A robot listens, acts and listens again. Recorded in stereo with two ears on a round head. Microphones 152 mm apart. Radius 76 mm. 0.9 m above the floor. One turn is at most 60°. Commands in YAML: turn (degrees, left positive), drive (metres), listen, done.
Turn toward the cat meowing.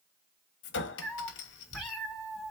turn: 30
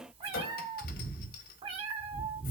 turn: -30
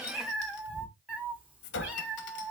done: "Found it: a cat meowing, straight ahead, 1 to 2 m away."